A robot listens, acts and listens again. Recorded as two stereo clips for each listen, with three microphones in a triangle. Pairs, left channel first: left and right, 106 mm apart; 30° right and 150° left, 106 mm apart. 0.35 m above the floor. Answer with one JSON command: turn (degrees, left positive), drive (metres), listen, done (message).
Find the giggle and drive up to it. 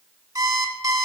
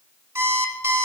{"listen": true}
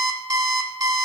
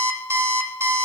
{"listen": true}
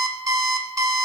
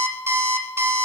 {"done": "I can't make out a giggle, only an alarm clock."}